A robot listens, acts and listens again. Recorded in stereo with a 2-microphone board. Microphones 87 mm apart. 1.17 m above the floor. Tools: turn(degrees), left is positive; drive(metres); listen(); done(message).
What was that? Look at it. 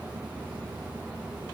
listen()
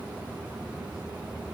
listen()
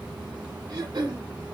turn(degrees=-50)
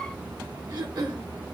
turn(degrees=-70)
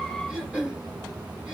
turn(degrees=-10)
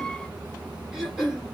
done("Facing the throat clearing, 1 to 2 m away.")